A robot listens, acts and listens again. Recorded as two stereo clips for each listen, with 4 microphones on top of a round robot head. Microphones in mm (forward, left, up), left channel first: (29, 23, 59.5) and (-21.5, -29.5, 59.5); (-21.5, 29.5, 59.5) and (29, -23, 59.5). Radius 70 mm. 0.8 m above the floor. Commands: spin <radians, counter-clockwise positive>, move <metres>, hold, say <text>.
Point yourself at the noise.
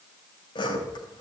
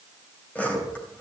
spin 1.05
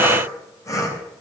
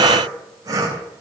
say Found it: sawing, straight ahead, 2 to 4 m away.